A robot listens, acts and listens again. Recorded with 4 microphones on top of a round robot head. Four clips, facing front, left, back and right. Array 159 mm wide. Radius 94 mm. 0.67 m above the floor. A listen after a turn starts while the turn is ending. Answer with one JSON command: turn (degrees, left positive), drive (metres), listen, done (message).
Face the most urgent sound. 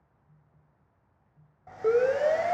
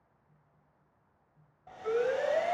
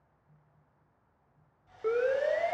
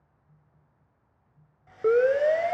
{"turn": -75}
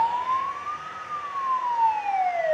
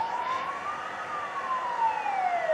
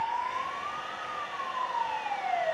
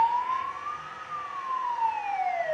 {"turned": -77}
{"done": "Facing the siren."}